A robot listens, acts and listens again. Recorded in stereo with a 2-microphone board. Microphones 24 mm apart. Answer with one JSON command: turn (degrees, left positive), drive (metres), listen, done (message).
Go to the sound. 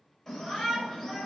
{"turn": 30}
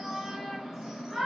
{"turn": -15}
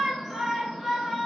{"drive": 1.0}
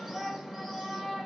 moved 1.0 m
{"drive": 1.0}
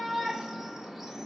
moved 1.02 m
{"turn": -10}
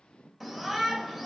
{"drive": 1.0}
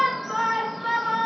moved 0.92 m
{"drive": 1.0}
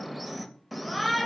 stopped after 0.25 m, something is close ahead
{"done": "I am next to the shout."}